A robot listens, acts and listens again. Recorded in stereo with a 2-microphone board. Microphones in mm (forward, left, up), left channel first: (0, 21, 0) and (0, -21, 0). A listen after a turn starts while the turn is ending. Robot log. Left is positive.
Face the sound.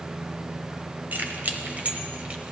note: The keys jangling: about 35° right or 145° right.
cmd yaw -35
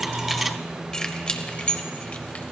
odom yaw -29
note: So it is at 30° left.
cmd yaw +30
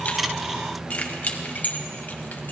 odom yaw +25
note: The keys jangling is now 40° left.
cmd yaw +40
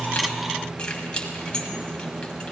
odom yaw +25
note: The keys jangling is now 25° left.
cmd yaw +25
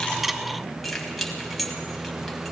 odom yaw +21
end: Facing the keys jangling, 1 to 2 m away.